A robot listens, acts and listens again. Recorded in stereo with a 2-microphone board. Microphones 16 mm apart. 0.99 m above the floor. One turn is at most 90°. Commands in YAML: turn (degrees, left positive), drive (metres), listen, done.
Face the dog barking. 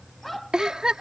turn: 30
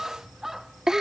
turn: -25
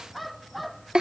done: "Facing the dog barking."